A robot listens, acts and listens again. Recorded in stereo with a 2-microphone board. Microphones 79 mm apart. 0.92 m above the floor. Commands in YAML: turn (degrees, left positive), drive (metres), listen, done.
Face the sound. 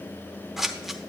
turn: -30
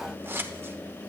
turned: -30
turn: -145
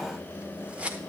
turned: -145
turn: -20
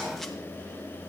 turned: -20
listen: true
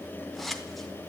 done: "Facing the scissors, under 1 m away."